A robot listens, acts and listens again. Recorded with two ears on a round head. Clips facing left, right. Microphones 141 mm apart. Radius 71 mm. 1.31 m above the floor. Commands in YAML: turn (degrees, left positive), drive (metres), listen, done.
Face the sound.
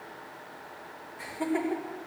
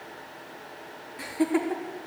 turn: -90
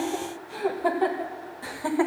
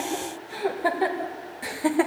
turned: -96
turn: -25
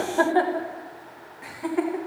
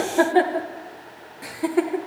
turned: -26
turn: -50
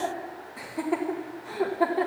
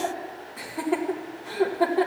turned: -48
done: "Facing the laughter."